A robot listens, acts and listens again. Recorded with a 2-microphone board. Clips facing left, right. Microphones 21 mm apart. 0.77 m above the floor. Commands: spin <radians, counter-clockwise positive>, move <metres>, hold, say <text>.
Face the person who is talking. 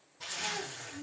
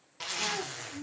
spin -0.70
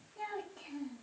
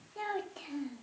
spin -1.83
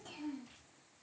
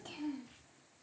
spin -0.35
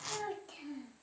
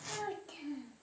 say Found it: a child speaking, straight ahead, under 1 m away.